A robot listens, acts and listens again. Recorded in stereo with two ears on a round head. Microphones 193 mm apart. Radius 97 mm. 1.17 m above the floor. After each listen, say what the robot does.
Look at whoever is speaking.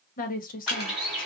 Turn 40° left.
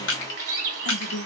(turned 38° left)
Turn 95° left.
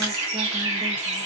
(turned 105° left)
Turn 10° right.
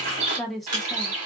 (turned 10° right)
Found it: a woman speaking, straight ahead, under 1 m away.